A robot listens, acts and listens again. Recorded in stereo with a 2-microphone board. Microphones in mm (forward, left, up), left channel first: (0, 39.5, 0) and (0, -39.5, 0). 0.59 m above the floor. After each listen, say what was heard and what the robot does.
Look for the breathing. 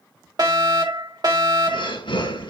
Turn 90° left.
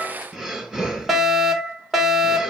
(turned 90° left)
Facing the breathing.